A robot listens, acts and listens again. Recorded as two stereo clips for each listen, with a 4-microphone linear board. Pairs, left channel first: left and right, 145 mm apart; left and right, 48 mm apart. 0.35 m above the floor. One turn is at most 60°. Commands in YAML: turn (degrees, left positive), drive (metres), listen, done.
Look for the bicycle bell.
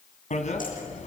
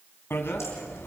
turn: 55
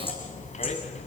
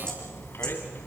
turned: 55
turn: 60
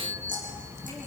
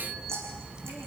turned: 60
turn: -20
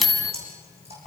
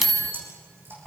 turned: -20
done: "Found it: a bicycle bell, straight ahead, 2 to 4 m away."